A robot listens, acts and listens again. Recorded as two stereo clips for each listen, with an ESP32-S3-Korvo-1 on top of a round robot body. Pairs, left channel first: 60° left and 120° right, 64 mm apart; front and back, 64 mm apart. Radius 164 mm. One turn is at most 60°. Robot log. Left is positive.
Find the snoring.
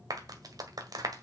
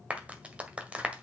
cmd idle
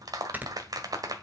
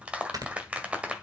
note: The snoring: straight behind.
cmd yaw +60
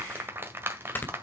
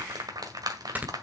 note: The snoring is now 115° left.
cmd yaw +60
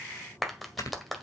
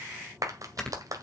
note: The snoring is now 80° left.
cmd yaw +60
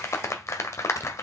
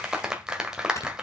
note: The snoring is now 35° left.
cmd yaw +35
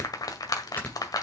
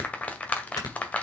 end: Facing the snoring, 2 to 4 m away.